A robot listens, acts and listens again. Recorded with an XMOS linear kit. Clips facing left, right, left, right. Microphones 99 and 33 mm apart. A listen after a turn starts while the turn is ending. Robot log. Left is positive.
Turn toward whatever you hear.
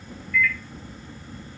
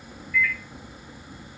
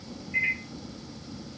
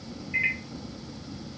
note: The microwave: about 25° right or 155° right.
cmd yaw -25
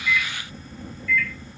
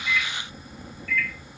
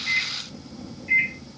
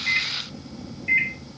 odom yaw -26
note: So it is at 125° right.
cmd yaw -125
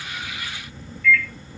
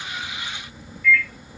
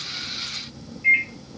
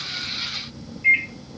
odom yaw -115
note: The microwave is now 10° right.
cmd yaw -10
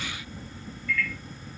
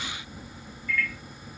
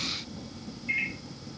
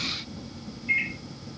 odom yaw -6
end: Found it: a microwave, straight ahead, under 1 m away.